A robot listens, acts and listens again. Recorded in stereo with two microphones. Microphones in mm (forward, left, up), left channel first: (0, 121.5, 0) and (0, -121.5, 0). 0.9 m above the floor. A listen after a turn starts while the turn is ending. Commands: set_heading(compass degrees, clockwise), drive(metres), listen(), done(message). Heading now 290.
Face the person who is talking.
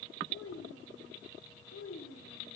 set_heading(220)
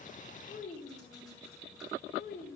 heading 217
set_heading(177)
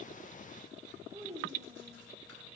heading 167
set_heading(177)
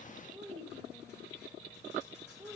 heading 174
done("Found it: a child speaking, straight ahead.")